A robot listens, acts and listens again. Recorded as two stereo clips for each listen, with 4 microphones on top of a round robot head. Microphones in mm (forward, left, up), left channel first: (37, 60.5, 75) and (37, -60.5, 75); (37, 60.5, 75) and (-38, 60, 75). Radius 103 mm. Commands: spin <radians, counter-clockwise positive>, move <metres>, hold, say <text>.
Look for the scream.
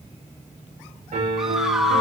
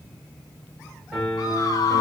say Facing the scream, 1 to 2 m away.